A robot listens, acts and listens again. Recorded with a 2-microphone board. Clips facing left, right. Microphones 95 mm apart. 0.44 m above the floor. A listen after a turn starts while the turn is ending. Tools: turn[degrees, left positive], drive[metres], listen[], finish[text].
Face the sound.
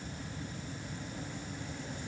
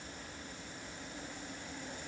Action: listen[]
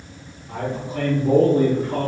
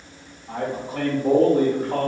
Thought: The man speaking: about 60° right or 120° right.
Action: turn[-60]
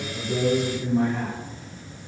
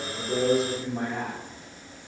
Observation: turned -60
Thought: So it is at 30° right.
Action: turn[-30]
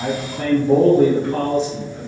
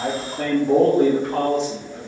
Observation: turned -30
Thought: The man speaking is now 25° right.
Action: turn[-25]
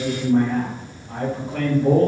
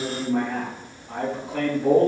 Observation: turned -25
Action: finish[Facing the man speaking, 2 to 4 m away.]